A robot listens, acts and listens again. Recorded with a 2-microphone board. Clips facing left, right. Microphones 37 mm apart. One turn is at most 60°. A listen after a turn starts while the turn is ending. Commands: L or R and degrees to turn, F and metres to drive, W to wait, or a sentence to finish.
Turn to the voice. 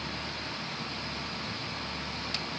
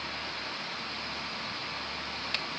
W
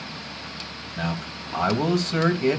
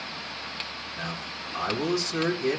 L45
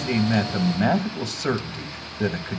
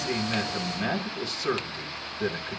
L60
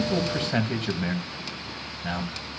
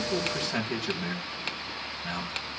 L45
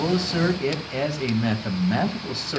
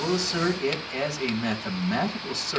L15
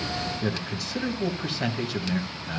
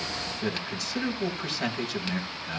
Found it: a man speaking, straight ahead, 2 to 4 m away.